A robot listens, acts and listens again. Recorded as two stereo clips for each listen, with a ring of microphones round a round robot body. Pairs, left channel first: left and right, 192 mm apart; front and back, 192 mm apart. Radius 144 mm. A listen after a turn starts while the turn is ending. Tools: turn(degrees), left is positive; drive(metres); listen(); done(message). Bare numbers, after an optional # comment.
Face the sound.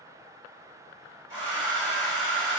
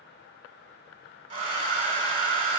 # The hair dryer: 130° left.
turn(130)
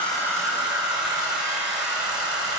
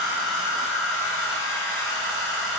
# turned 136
done("Found it: a hair dryer, straight ahead, 1 to 2 m away.")